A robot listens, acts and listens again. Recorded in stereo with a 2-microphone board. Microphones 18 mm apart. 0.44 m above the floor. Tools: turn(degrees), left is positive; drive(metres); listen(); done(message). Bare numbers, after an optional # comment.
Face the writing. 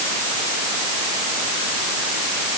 listen()
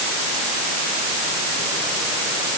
listen()
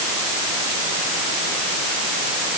done("I can't make out writing.")